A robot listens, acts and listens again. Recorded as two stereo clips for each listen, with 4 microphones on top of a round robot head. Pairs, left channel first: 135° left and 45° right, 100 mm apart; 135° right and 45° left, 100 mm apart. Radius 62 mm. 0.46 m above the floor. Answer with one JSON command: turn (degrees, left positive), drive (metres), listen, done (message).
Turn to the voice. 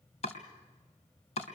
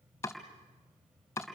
{"listen": true}
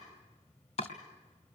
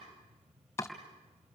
{"listen": true}
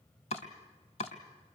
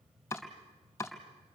{"done": "I can't make out anyone speaking, only chopping."}